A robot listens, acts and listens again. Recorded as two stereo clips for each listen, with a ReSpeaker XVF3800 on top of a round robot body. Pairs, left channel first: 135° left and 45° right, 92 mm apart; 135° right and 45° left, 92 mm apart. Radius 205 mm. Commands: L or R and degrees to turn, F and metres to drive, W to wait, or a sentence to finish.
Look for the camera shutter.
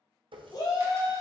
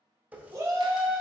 W
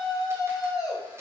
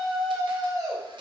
W
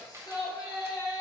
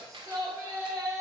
L15
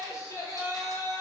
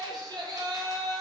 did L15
W
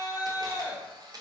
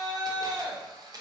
Facing the camera shutter.